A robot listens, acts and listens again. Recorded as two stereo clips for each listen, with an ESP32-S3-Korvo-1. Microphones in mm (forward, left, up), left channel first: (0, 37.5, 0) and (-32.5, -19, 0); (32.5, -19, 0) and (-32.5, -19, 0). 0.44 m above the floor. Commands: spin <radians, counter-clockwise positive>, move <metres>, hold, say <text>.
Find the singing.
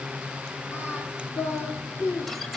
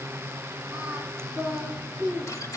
spin 1.75
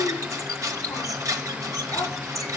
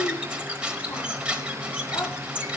spin 0.26
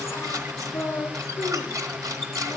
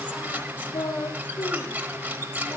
say Found it: singing, straight ahead.